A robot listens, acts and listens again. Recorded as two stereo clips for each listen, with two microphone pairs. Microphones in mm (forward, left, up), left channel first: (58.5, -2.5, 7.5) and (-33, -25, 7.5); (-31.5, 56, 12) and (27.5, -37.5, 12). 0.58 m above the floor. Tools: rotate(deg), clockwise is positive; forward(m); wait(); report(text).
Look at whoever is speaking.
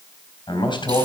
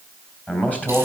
rotate(-50)
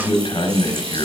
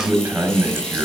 rotate(-20)
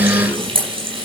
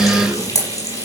wait()
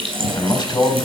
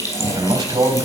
rotate(10)
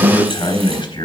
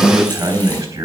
report("Found it: a man speaking, straight ahead.")